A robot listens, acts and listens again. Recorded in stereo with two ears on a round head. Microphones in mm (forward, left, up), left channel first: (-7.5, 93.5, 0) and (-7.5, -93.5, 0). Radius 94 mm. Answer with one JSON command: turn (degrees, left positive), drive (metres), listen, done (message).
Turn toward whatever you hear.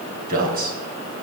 {"turn": -45}
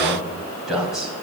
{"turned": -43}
{"done": "Found it: a man speaking, straight ahead, 2 to 4 m away."}